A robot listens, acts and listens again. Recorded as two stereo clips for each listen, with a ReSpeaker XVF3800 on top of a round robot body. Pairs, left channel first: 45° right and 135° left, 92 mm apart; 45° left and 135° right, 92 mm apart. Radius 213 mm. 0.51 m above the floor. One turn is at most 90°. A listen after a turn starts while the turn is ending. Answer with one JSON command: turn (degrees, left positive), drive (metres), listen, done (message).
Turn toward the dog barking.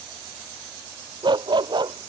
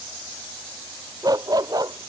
{"turn": 90}
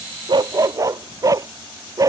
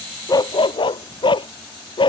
{"turn": 80}
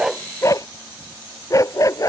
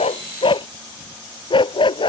{"turn": 10}
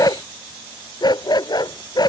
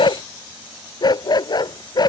{"done": "Facing the dog barking."}